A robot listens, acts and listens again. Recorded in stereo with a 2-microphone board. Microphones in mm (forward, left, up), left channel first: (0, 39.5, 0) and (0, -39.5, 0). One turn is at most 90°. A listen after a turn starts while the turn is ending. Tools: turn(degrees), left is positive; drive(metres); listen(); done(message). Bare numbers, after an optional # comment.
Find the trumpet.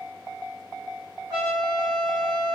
# The trumpet: about 45° right or 135° right.
turn(-45)
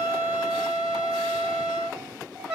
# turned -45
done("Found it: a trumpet, straight ahead, 1 to 2 m away.")